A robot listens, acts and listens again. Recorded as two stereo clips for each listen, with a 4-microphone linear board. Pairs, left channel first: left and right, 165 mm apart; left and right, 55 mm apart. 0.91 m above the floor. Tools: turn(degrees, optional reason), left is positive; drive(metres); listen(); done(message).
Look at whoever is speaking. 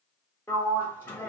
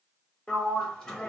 listen()
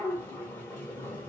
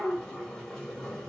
listen()
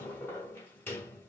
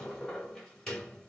done("I can't make out anyone speaking to turn to.")